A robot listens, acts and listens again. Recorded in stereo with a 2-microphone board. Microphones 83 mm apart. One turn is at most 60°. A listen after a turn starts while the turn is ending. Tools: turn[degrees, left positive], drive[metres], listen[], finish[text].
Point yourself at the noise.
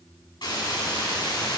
Thought: The hiss: about 70° left or 110° left.
Action: turn[60]
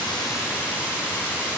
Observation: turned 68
Thought: So it is at 25° left.
Action: turn[25]
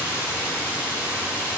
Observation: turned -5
Thought: The hiss is now 35° left.
Action: turn[35]
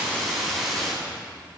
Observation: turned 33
Action: finish[Found it: a hiss, straight ahead.]